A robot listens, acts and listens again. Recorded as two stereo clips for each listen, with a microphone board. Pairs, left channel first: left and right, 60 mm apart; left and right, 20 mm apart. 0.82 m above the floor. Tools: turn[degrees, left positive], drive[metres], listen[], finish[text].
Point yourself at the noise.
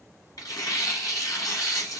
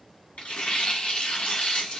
Action: turn[90]
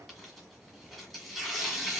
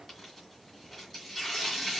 Action: finish[Found it: tearing paper, straight ahead.]